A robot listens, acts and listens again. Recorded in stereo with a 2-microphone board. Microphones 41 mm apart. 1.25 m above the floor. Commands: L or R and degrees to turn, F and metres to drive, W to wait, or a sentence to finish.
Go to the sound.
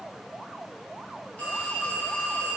L35
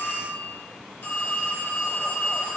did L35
L110
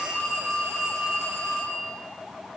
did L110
F1.0
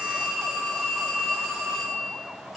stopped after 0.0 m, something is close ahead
Blocked. The phone ringing is further on, straight ahead.